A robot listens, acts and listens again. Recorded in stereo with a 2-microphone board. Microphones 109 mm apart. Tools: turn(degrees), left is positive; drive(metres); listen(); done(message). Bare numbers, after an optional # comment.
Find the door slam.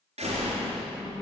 # The door slam: about 75° right or 105° right.
turn(-75)
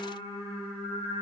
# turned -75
listen()
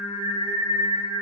done("I heard a door slam, but can't make it out now. It was about straight ahead or 30° right.")